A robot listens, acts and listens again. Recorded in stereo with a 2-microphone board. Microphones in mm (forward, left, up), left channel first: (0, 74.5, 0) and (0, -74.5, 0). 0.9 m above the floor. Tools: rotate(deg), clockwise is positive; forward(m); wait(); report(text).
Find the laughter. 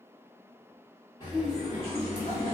rotate(-35)
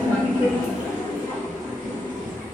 rotate(-15)
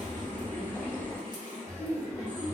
rotate(15)
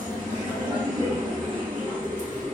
report("Found it: laughter, straight ahead.")